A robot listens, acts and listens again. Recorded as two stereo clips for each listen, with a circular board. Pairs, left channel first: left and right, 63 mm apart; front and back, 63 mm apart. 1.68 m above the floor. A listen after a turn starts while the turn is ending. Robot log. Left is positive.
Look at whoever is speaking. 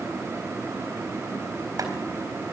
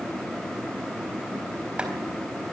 cmd idle
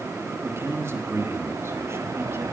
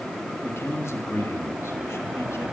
note: The man speaking: 45° right.
cmd yaw -45
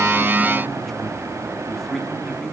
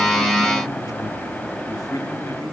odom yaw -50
end: Found it: a man speaking, straight ahead, 2 to 4 m away.